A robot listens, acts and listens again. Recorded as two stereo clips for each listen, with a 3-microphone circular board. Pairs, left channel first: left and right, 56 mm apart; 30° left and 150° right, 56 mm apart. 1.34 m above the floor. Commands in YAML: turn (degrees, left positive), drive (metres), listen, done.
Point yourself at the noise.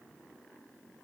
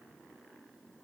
listen: true
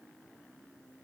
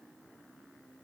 listen: true
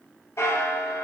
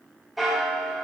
turn: 120
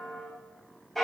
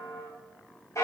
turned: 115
done: "Found it: a bell, straight ahead."